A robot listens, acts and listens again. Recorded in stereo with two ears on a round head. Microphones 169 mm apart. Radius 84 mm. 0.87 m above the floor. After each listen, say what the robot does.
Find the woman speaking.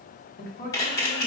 Turn 50° left.
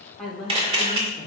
Found it: a woman speaking, straight ahead.